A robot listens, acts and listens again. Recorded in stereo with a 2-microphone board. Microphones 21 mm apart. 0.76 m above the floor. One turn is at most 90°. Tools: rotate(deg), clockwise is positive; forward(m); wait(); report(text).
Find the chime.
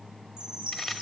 rotate(35)
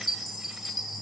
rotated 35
report("Found it: a chime, straight ahead.")